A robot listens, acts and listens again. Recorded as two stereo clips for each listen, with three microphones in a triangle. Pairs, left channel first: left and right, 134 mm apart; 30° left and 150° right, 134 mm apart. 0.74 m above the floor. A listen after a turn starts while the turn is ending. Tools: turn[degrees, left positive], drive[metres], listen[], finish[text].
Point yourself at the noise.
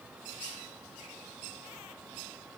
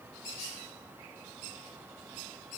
Action: listen[]
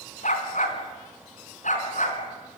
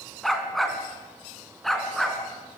Thought: The dog barking: 120° left.
Action: turn[120]
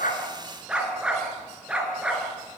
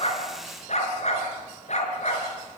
Thought: The dog barking is now 10° right.
Action: turn[-10]
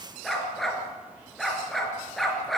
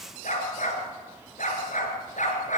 Action: finish[Found it: a dog barking, straight ahead.]